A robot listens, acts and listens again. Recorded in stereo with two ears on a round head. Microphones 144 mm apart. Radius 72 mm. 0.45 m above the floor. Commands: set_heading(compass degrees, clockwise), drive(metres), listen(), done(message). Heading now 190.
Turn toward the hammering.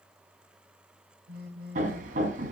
set_heading(240)
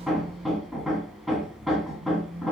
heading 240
done("Facing the hammering.")